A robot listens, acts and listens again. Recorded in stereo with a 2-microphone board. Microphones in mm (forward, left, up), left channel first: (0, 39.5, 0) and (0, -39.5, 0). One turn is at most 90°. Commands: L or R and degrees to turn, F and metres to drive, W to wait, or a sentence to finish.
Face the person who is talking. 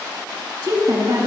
R60
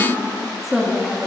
Facing the woman speaking.